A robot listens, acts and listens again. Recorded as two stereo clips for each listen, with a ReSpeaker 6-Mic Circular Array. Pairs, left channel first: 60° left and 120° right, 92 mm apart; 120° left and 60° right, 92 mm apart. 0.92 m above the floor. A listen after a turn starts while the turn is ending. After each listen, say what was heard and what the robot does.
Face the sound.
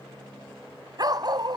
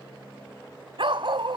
The dog barking: 85° right. Turn 85° right.
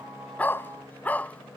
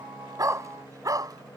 The dog barking is now 15° right. Turn 15° right.
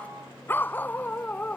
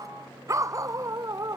The dog barking is now 15° right. Turn 15° right.
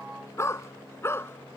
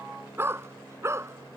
Found it: a dog barking, straight ahead.